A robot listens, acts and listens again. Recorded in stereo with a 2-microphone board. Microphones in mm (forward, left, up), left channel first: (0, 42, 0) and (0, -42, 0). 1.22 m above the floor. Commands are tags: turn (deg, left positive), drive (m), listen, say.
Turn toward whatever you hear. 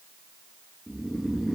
<turn deg="30"/>
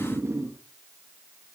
<turn deg="-35"/>
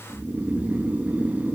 <turn deg="-20"/>
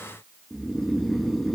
<say>Facing the snoring.</say>